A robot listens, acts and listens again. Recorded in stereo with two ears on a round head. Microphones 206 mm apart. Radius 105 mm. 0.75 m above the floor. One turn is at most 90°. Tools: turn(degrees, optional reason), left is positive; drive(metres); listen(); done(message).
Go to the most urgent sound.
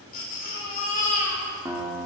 turn(degrees=40, reason="The baby crying: about 40° left or 140° left.")
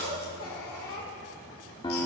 turn(degrees=90, reason="So it is at 100° left.")
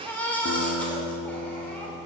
drive(metres=1.0)
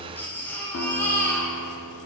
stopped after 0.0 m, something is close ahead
turn(degrees=10, reason="The baby crying is now 10° left.")
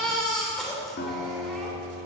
done("Something is in my way. I am facing the baby crying but have not reached it.")